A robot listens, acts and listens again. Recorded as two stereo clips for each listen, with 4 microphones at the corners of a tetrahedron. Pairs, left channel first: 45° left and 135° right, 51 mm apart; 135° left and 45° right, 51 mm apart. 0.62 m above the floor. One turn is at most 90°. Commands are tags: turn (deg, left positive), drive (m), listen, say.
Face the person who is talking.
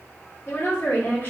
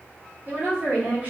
<say>Found it: a woman speaking, straight ahead.</say>